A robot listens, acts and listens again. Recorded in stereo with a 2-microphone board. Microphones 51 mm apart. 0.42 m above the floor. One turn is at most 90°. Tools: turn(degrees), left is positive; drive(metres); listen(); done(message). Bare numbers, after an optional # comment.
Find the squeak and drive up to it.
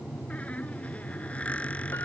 # The squeak: about 25° left or 155° left.
turn(25)
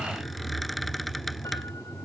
drive(1.0)
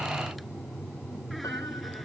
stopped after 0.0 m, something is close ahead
listen()
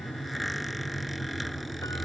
done("Something is in my way. I am facing the squeak but have not reached it.")